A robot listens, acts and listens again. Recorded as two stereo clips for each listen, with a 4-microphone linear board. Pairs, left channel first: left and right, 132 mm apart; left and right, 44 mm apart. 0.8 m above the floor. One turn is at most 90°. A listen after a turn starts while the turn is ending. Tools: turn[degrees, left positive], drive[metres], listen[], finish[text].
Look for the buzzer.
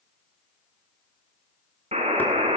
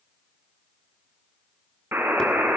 Thought: The buzzer: about 60° right or 120° right.
Action: turn[-60]
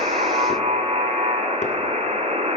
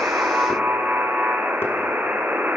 Thought: So it is at 55° right.
Action: turn[-55]
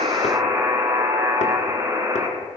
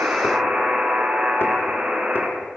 Thought: The buzzer is now 20° right.
Action: turn[-20]
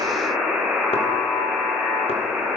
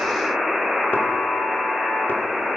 Action: finish[Facing the buzzer.]